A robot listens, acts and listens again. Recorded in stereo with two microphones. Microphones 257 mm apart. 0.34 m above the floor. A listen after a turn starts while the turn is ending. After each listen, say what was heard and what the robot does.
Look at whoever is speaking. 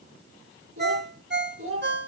The child speaking: about 55° right or 125° right. Turn 55° right.
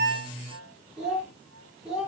Facing the child speaking.